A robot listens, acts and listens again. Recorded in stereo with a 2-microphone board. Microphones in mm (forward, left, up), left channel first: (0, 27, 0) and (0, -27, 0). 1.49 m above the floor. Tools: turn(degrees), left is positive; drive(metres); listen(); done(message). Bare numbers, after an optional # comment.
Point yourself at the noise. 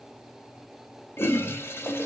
# The toilet flushing: about 45° left or 135° left.
turn(45)
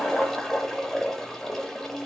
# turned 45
# So it is at 10° left.
turn(10)
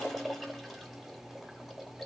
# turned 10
done("Found it: a toilet flushing, straight ahead.")